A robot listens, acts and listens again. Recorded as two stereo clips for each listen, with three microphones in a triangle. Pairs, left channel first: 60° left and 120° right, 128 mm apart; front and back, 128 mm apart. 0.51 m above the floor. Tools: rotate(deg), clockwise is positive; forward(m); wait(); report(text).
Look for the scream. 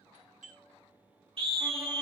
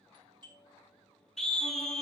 rotate(85)
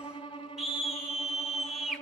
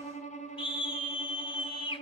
rotate(35)
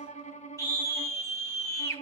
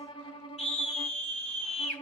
report("Found it: a scream, straight ahead, 1 to 2 m away.")